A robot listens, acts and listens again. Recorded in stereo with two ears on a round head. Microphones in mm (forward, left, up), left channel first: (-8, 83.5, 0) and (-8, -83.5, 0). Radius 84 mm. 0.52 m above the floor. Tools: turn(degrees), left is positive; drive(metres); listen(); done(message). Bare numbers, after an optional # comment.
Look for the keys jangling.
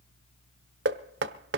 listen()
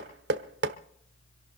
listen()
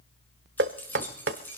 turn(30)
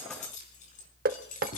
# So it is at 135° left.
turn(135)
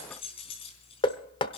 # The keys jangling is now 30° left.
turn(30)
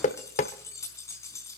# The keys jangling is now 15° left.
turn(15)
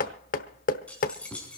done("Facing the keys jangling.")